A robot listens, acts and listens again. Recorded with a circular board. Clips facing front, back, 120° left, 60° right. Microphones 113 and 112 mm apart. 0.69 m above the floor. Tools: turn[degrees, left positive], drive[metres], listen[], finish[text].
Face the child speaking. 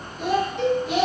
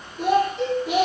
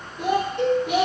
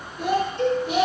Thought: The child speaking: 175° right.
Action: turn[-175]
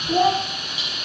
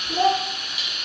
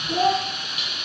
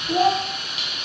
Thought: The child speaking is now 40° right.
Action: turn[-40]
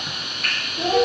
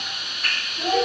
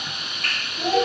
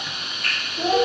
Thought: The child speaking is now 35° right.
Action: turn[-35]
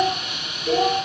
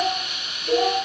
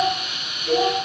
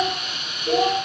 Action: finish[Found it: a child speaking, straight ahead.]